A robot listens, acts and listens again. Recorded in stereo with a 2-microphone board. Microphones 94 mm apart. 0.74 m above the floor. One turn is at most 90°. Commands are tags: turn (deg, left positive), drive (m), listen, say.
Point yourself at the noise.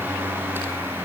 <listen/>
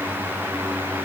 <listen/>
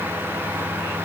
<say>I can't make out anything.</say>